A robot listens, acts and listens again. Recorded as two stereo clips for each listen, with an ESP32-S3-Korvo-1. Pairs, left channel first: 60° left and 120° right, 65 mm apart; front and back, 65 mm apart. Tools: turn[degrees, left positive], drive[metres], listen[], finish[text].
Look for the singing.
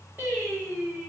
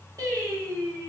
Thought: The singing: 175° left.
Action: turn[175]
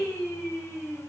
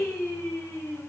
Thought: The singing is now 10° left.
Action: turn[10]
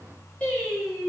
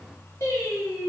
Thought: The singing is now 15° right.
Action: turn[-15]
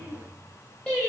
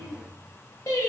Thought: The singing is now 15° right.
Action: turn[-15]
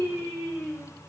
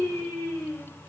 Thought: The singing is now 10° right.
Action: turn[-10]
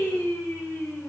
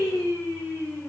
Action: finish[Found it: singing, straight ahead, 1 to 2 m away.]